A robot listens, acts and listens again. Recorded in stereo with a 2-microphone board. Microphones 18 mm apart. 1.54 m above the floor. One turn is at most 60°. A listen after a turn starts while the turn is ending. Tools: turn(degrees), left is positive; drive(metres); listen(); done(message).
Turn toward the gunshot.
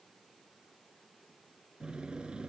listen()
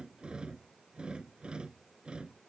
listen()
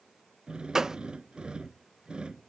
turn(degrees=-35)
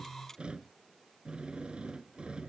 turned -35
listen()
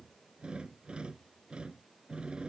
done("I heard a gunshot, but can't make it out now. It was about straight ahead or 110° right.")